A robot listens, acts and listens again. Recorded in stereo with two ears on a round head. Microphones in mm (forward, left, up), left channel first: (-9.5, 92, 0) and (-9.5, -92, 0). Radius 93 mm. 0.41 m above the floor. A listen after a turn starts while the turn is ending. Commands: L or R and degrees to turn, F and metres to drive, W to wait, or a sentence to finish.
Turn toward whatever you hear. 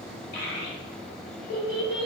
L55
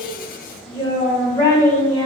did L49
Found it: a child speaking, straight ahead, 1 to 2 m away.